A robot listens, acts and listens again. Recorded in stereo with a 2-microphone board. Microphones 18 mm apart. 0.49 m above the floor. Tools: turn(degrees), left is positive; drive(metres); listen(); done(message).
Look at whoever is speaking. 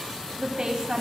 turn(degrees=-65)
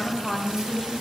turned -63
turn(degrees=-10)
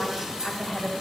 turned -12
done("Found it: a woman speaking, straight ahead, 2 to 4 m away.")